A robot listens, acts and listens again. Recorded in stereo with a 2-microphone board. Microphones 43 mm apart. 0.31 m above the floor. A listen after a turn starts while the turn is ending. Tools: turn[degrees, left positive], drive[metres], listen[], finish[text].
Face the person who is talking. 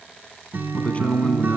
Thought: The man speaking: about 35° left or 145° left.
Action: turn[35]
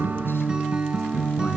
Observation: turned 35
Action: listen[]
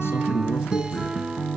Action: listen[]
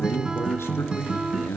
Thought: So it is at 100° left.
Action: turn[100]
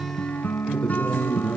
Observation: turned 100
Thought: The man speaking is now 30° left.
Action: turn[30]
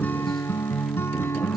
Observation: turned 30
Action: listen[]
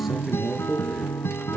Action: finish[Found it: a man speaking, straight ahead.]